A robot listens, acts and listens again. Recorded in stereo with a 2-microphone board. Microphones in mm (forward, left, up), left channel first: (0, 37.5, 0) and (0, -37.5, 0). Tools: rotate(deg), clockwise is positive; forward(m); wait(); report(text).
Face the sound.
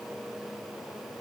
wait()
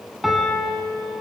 rotate(-30)
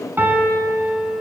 rotate(30)
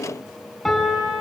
report("Found it: a piano, straight ahead.")